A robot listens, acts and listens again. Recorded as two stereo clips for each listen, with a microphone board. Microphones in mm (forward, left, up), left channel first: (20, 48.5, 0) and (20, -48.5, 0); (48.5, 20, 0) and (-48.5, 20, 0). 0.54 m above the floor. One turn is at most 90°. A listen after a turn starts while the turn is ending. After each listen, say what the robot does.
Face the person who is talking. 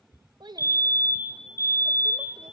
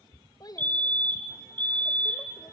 Turn 50° right.
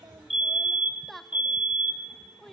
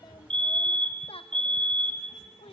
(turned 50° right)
Facing the child speaking, 1 to 2 m away.